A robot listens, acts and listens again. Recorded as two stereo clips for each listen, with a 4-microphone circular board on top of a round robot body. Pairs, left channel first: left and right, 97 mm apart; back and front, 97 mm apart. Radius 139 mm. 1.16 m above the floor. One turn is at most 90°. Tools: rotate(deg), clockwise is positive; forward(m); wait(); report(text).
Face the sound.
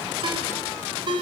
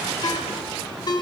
rotate(90)
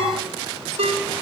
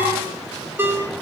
rotate(70)
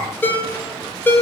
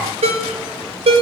rotate(-20)
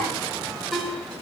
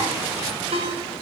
report("Found it: a ringtone, straight ahead.")